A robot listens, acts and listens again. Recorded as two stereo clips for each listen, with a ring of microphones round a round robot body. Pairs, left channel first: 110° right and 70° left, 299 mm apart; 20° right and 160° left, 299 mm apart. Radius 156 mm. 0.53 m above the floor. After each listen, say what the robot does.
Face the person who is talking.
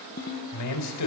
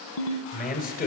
Turn 85° right.
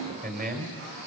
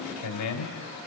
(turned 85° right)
Facing the man speaking.